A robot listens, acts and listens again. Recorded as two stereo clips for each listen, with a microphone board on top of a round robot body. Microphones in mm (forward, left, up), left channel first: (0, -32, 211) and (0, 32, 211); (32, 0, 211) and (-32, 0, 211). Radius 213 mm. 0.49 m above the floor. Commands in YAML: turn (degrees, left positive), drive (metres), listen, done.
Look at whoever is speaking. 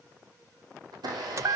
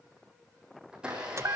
listen: true
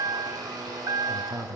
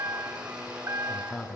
turn: 60
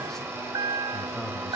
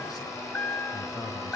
done: "Facing the man speaking, over 4 m away."